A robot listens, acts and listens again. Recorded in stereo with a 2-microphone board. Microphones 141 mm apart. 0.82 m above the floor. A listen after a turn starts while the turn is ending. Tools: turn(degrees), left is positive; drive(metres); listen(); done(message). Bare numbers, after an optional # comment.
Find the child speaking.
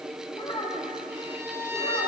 # The child speaking: about 40° left or 140° left.
turn(40)
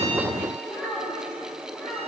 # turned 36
# So it is at 20° left.
turn(20)
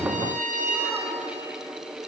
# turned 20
listen()
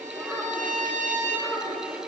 done("Facing the child speaking.")